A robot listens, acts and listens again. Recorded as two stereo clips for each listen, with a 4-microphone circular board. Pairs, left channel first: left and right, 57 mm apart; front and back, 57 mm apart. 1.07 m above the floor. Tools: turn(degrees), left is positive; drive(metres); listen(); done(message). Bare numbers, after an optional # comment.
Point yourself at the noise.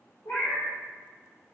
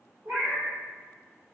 # The cat meowing: 135° left.
turn(135)
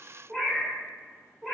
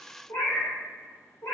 # The cat meowing is now 10° right.
turn(-10)
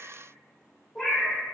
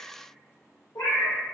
done("Found it: a cat meowing, straight ahead, 1 to 2 m away.")